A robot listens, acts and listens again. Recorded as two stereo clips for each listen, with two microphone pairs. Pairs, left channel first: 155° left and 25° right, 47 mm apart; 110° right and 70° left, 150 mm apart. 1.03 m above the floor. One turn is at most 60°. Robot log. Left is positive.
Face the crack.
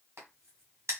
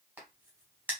end: Facing the crack, 2 to 4 m away.